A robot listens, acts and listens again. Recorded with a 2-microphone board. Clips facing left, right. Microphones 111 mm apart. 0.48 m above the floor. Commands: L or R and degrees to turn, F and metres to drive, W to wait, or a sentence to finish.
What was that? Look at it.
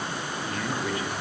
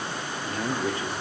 R30
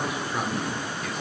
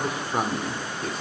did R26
R40
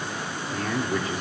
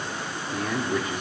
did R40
Found it: a man speaking, straight ahead.